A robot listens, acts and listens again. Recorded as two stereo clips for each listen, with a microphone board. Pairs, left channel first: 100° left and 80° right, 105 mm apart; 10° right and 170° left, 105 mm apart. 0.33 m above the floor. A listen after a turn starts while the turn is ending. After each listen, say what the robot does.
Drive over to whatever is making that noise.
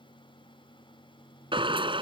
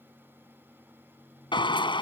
Turn 45° right.
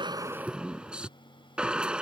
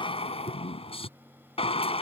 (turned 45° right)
Drive 1.0 m forward.
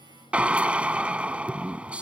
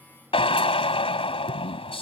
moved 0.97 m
Drive 1.0 m forward.
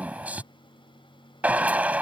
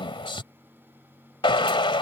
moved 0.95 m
Drive 1.0 m forward.
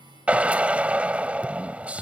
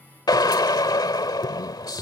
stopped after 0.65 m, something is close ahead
Turn 10° right.
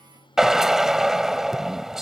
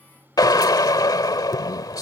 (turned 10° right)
Arrived at the drill, straight ahead.